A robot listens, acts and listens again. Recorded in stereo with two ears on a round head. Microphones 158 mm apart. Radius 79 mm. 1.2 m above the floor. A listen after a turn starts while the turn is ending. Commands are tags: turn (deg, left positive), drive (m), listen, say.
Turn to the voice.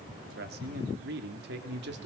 <turn deg="-70"/>
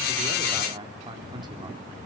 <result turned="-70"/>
<turn deg="-25"/>
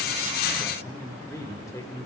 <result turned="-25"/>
<turn deg="20"/>
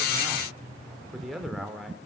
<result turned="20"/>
<say>Found it: a man speaking, straight ahead.</say>